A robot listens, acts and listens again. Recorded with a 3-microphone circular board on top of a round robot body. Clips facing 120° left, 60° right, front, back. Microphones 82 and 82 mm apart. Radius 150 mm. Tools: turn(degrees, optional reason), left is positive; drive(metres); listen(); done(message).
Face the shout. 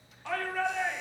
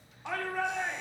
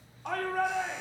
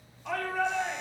done("Facing the shout.")